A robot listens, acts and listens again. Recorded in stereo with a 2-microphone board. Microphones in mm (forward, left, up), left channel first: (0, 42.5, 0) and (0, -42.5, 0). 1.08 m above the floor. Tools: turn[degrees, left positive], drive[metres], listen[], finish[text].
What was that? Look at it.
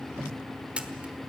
Action: turn[-30]
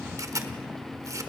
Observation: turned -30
Thought: So it is at 135° right.
Action: turn[-135]
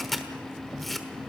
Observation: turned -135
Action: finish[Found it: a camera shutter, straight ahead, 1 to 2 m away.]